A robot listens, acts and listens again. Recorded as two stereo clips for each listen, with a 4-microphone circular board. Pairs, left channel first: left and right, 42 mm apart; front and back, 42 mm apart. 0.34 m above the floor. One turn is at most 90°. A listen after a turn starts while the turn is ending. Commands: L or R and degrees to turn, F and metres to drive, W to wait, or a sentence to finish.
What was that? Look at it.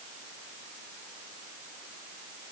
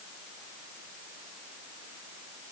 W
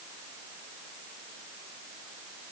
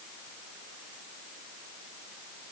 W
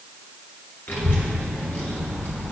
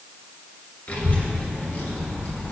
L60
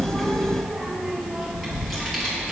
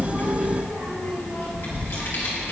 Facing the child speaking, over 4 m away.